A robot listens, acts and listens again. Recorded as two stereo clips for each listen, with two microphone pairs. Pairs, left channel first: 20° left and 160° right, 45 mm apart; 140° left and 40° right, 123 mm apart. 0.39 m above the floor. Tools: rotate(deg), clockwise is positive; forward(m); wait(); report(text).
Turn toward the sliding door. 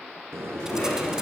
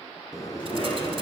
rotate(160)
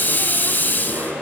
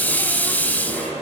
wait()
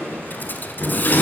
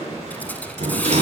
rotate(15)
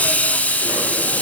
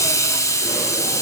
wait()
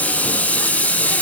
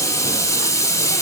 wait()
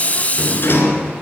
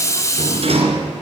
report("Facing the sliding door.")